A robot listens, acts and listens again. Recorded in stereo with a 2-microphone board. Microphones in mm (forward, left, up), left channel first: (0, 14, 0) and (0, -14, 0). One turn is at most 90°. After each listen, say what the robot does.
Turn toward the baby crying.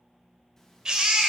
Turn 35° right.
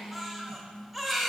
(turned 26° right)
Turn 10° right.
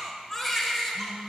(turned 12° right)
Facing the baby crying.